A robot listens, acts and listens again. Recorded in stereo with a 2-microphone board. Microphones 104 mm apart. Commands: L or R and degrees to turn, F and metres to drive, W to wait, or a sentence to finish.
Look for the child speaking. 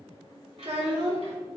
R90
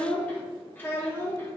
L25
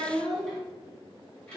L10
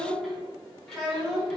Found it: a child speaking, straight ahead, 2 to 4 m away.